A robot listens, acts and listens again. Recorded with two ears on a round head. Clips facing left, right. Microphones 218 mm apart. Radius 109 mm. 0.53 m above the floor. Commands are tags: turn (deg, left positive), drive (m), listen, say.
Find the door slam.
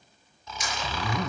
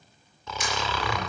<turn deg="-50"/>
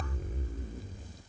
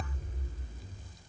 <listen/>
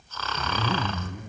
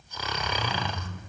<say>I heard a door slam, but can't make it out now. It was about straight ahead or 80° right.</say>